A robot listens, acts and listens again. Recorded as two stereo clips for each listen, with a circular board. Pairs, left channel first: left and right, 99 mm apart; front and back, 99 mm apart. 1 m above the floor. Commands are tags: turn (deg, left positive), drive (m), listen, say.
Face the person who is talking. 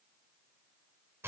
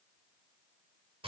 <listen/>
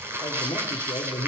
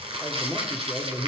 <turn deg="125"/>
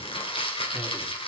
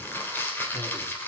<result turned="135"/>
<turn deg="-10"/>
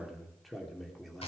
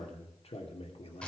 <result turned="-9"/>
<say>Facing the man speaking, 2 to 4 m away.</say>